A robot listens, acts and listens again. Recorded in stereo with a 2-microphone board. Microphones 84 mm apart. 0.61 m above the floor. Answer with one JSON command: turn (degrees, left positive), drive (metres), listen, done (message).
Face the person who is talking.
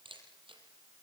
{"listen": true}
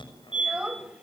{"turn": -30}
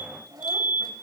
{"turn": -140}
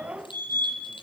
{"turn": -15}
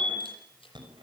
{"listen": true}
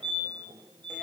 {"listen": true}
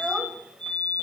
{"done": "Facing the child speaking, 2 to 4 m away."}